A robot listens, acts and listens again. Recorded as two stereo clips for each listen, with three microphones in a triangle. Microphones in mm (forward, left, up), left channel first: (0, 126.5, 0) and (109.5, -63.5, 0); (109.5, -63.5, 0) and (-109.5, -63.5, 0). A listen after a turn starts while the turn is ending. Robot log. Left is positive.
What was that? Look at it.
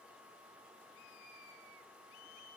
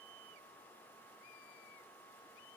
cmd idle
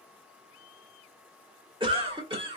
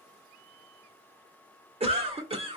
note: The cough: 120° right.
cmd yaw -120
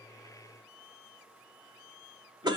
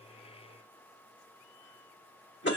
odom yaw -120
note: The cough is now 10° left.
cmd yaw +10
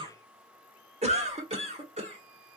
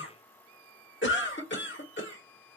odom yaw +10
end: Found it: a cough, straight ahead, 1 to 2 m away.